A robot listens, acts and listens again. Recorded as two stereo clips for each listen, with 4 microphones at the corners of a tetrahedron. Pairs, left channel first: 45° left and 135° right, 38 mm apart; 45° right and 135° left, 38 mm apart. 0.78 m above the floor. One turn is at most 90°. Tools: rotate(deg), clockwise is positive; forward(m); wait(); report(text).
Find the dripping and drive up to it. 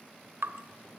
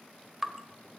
rotate(90)
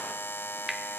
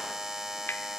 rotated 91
rotate(55)
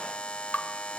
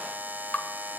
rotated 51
forward(1.0)
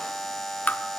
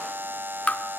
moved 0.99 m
forward(1.0)
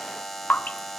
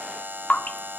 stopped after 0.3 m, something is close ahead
report("I am next to the dripping.")